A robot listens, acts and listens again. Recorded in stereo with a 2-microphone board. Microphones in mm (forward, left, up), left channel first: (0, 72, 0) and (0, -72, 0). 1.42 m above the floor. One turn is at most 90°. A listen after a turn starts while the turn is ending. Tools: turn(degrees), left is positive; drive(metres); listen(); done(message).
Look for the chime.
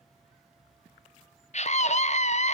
listen()
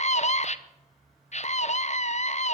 listen()
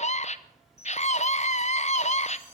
turn(degrees=20)
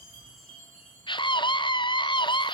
done("Facing the chime.")